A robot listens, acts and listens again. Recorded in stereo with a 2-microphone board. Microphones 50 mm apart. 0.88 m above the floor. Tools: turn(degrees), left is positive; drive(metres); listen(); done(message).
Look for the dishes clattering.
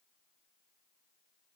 listen()
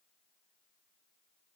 listen()
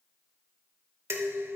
turn(degrees=-60)
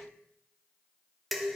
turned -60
done("Facing the dishes clattering, 1 to 2 m away.")